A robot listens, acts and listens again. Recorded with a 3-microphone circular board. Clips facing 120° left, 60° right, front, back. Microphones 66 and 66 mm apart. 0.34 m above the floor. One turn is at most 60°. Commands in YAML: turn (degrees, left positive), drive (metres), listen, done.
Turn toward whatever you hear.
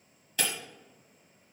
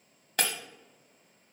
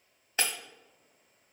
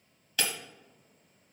turn: -55
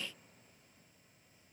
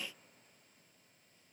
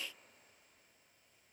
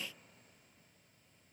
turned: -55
done: "I heard breaking glass from this way, but can't make it out now."